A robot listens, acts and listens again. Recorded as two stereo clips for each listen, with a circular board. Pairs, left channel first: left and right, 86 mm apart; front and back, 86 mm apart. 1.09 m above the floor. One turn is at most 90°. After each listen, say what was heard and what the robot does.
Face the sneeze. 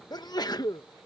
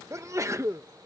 The sneeze: 125° left. Turn 90° left.
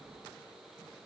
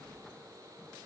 Nothing new. It was at 35° left. Turn 35° left.
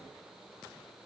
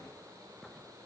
Facing where the sneeze came from. I can't hear it now.